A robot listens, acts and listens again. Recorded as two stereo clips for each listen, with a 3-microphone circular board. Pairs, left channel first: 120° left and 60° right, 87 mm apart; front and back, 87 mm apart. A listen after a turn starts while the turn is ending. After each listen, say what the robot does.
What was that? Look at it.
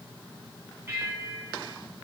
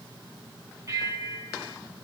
Turn 125° right.
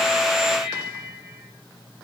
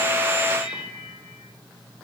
Turn 15° left.
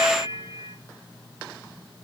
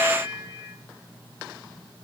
Facing the bell, over 4 m away.